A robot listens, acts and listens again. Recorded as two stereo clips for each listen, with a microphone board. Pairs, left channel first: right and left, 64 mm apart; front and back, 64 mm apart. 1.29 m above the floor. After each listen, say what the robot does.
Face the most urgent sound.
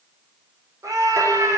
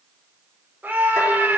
Turn 115° left.
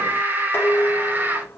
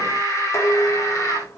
Turn 30° left.
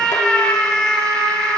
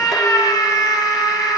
Turn 15° right.
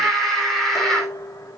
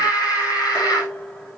Found it: a scream, straight ahead.